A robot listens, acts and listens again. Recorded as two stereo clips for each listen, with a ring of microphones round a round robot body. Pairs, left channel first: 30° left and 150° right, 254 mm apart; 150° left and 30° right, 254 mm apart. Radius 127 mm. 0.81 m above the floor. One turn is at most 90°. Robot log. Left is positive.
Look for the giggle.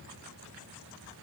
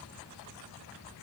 cmd idle
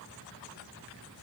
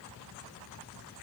cmd idle
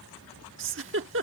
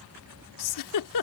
note: The giggle: 165° left.
cmd yaw +90
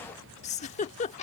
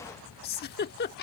note: The giggle is now 95° left.
cmd yaw +90
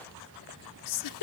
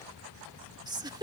note: The giggle is now 45° left.
cmd yaw +45
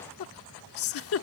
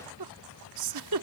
note: The giggle is now 10° right.
cmd yaw -10
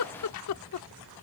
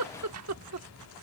end: Facing the giggle.